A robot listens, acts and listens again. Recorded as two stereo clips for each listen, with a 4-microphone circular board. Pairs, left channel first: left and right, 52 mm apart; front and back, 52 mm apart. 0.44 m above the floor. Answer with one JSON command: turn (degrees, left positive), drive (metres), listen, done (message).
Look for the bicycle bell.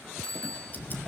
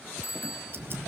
{"turn": 15}
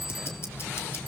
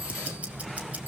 {"listen": true}
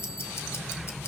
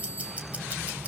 {"listen": true}
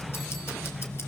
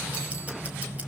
{"done": "Facing where the bicycle bell came from. I can't hear it now."}